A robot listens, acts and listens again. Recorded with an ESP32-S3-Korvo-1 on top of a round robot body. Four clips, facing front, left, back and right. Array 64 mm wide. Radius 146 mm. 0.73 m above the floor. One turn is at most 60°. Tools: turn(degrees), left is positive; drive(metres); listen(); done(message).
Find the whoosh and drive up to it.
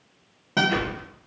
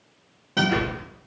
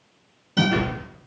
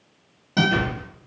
turn(degrees=35)
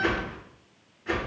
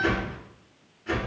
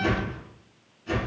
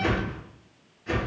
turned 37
drive(metres=1.0)
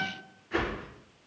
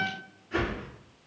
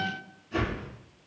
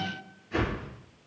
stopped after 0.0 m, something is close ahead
done("Blocked. The whoosh is further on, straight ahead.")